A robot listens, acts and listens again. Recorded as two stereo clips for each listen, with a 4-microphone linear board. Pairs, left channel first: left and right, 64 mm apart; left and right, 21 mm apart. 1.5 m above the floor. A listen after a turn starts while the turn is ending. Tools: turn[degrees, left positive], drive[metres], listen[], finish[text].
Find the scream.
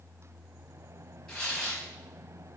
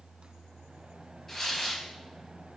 Action: listen[]
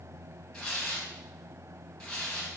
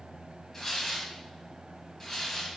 Action: listen[]
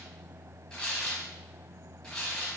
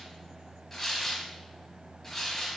Action: finish[I can't make out a scream, only tearing paper.]